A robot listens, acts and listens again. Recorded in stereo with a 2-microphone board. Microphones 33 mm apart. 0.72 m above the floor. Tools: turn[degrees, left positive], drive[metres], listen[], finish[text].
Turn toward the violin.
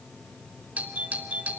Action: listen[]
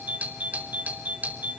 Action: listen[]
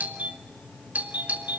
Action: finish[I can't make out a violin to turn to.]